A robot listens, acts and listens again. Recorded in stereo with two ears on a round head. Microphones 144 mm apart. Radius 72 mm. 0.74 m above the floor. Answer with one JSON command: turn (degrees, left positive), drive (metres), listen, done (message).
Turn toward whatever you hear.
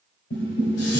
{"turn": 90}
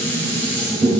{"turn": 10}
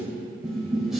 {"done": "Found it: dishes clattering, straight ahead, 2 to 4 m away."}